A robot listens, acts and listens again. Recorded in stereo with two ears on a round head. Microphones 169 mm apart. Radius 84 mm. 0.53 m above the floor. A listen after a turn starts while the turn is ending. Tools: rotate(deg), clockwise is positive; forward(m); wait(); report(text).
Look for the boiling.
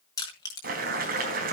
rotate(55)
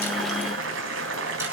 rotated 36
rotate(90)
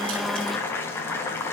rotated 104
rotate(-15)
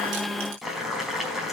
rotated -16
report("Facing the boiling.")